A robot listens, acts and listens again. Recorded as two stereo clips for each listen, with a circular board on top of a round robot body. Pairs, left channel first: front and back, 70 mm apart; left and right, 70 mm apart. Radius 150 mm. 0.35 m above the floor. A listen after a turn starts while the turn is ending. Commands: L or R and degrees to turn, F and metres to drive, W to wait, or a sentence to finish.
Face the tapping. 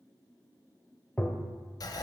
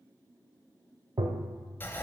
R70
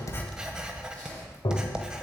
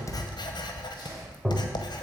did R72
Facing the tapping, 1 to 2 m away.